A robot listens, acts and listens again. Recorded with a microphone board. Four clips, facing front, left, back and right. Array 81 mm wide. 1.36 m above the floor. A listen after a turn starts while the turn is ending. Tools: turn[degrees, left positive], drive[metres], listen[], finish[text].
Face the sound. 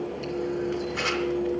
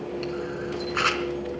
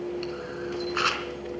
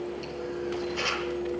Thought: The camera shutter: 125° left.
Action: turn[125]
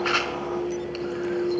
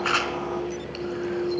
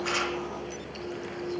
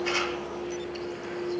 Action: listen[]
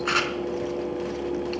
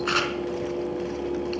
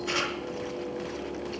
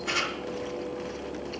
Thought: The camera shutter is now 40° left.
Action: turn[40]
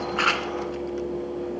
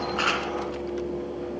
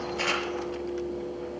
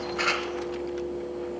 Action: listen[]
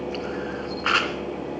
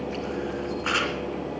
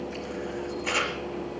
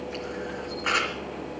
Action: finish[Found it: a camera shutter, straight ahead.]